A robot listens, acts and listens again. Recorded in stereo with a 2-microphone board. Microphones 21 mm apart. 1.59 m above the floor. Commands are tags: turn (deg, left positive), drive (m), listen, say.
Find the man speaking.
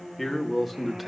<turn deg="-30"/>
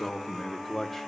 <turn deg="30"/>
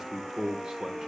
<turn deg="-35"/>
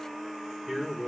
<turn deg="-20"/>
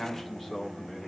<say>Found it: a man speaking, straight ahead.</say>